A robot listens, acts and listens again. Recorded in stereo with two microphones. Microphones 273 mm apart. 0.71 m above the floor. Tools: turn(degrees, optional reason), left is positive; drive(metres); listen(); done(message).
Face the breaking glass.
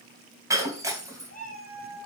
turn(degrees=-30)
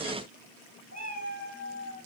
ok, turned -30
listen()
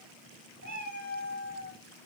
done("I heard breaking glass, but can't make it out now. It was about 20° left or 140° right.")